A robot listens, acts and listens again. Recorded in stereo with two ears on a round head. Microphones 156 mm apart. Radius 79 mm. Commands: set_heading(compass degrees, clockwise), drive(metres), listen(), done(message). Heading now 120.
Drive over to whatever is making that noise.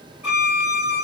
set_heading(150)
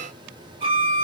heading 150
set_heading(285)
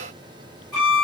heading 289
drive(1.0)
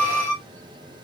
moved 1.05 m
set_heading(279)
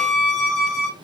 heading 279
drive(1.0)
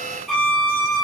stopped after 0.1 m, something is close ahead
done("I am next to the violin.")